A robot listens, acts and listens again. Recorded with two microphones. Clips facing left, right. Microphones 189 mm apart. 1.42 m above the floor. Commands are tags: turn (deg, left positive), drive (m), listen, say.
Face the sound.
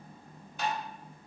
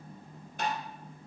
<turn deg="-55"/>
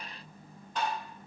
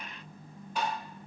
<turn deg="-10"/>
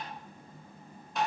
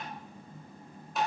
<say>Facing the tapping.</say>